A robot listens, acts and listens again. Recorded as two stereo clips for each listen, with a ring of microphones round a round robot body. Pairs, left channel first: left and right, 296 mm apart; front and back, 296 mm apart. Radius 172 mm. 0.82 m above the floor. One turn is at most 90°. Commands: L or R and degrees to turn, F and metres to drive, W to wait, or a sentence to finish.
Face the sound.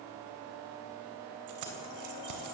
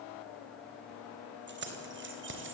R90
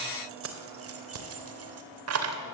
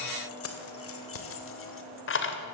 R50
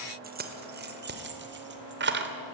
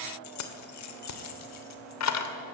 R35
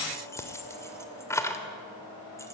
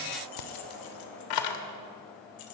L10
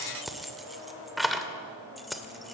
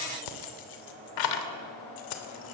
Facing the keys jangling.